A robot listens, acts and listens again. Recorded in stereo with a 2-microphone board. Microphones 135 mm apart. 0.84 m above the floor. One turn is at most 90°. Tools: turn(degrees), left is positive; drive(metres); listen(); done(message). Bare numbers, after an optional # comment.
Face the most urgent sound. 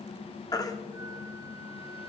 # The baby crying: about 25° left or 155° left.
turn(25)
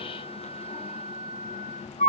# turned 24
# So it is at 130° left.
turn(90)
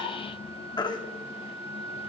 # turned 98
# The baby crying is now 30° left.
turn(30)
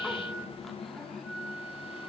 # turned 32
listen()
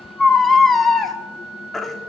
done("Found it: a baby crying, straight ahead.")